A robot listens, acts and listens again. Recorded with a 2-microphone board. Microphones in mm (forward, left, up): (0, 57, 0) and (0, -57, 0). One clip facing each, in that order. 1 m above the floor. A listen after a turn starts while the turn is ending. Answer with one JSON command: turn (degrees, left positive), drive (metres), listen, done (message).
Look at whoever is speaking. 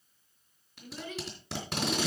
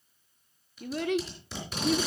{"turn": -70}
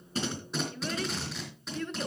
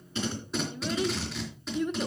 {"turn": -15}
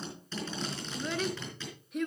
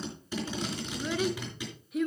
{"done": "Found it: a child speaking, straight ahead."}